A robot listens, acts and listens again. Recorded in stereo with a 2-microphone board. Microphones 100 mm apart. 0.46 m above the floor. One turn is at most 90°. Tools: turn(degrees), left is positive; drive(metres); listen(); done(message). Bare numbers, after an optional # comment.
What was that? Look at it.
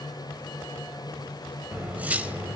# The cutlery clinking: about 15° right or 165° right.
turn(-15)
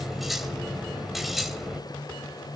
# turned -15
done("Found it: cutlery clinking, straight ahead.")